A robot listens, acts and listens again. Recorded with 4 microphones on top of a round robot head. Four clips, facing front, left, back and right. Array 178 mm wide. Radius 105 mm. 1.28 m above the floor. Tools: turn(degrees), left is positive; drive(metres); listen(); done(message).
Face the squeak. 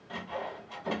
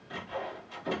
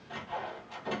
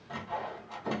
listen()
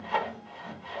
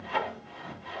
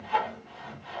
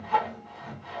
listen()
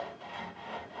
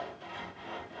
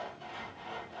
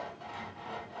done("I can't make out a squeak to turn to.")